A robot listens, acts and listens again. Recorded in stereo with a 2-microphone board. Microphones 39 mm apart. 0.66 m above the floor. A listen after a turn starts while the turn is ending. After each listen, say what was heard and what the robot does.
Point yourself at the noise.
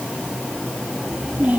The child speaking: about 50° right or 130° right. Turn 50° right.
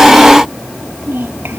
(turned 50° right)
So it is at 85° right. Turn 85° right.
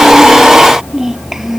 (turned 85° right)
The child speaking is now 10° right. Turn 10° right.
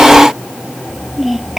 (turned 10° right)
Found it: a child speaking, straight ahead.